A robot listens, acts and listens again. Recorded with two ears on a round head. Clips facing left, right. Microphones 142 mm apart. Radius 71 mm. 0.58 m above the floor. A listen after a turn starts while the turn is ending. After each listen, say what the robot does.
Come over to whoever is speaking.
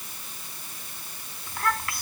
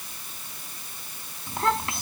Turn 20° right.
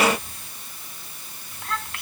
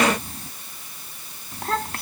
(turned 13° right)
Turn 145° right.
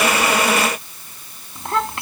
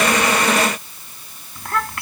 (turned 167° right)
Turn 20° left.
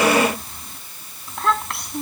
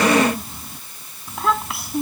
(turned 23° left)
Drive 1.0 m forward.
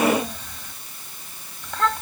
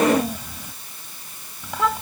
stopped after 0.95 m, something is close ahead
Turn 10° right.
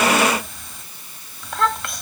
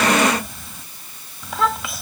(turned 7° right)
Blocked. The child speaking is further on, straight ahead.